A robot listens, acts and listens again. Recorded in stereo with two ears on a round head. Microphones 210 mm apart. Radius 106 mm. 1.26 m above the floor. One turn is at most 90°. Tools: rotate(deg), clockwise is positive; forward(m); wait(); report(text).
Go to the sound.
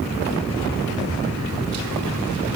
wait()
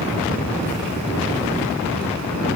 wait()
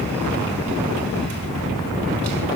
report("I can't make out anything to turn to.")